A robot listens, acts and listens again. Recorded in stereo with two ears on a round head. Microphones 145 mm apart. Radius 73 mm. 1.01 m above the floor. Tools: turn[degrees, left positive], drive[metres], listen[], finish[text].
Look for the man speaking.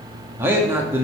Action: turn[-30]
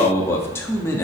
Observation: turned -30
Thought: So it is at 15° left.
Action: turn[15]
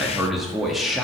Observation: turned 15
Action: finish[Found it: a man speaking, straight ahead.]